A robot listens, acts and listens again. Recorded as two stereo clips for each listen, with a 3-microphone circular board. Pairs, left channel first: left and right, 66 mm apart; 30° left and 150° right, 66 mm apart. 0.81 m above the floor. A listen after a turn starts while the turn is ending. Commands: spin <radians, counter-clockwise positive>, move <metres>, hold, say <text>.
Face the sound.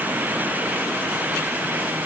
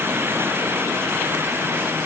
hold
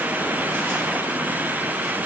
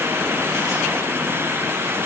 hold
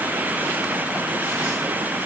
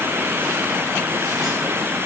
say I can't make out anything.